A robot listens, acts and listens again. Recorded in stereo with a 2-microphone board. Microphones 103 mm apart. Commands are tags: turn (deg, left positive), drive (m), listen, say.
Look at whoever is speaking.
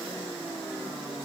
<listen/>
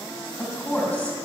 <turn deg="30"/>
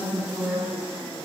<turn deg="-15"/>
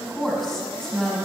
<say>Found it: a woman speaking, straight ahead.</say>